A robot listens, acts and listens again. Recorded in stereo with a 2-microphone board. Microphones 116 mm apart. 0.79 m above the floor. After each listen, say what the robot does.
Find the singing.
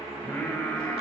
Turn 30° left.
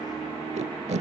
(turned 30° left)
Keep listening.
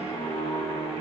Turn 140° left.
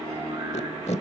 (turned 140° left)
Turn 35° right.
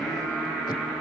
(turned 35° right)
Turn 10° left.
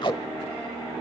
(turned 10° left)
Facing the singing, over 4 m away.